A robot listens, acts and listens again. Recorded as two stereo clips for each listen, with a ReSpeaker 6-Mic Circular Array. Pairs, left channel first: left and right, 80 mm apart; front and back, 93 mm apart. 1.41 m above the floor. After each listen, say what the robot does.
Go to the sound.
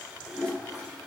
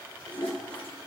Turn 10° left.
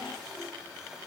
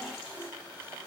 Keep listening.
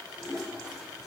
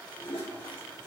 Drive 1.0 m forward.
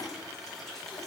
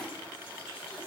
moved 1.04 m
Drive 1.0 m forward.
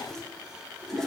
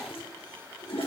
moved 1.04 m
Drive 1.0 m forward.
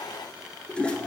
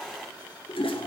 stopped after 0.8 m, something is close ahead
Turn 15° left.
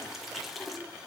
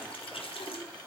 Arrived at the toilet flushing, straight ahead.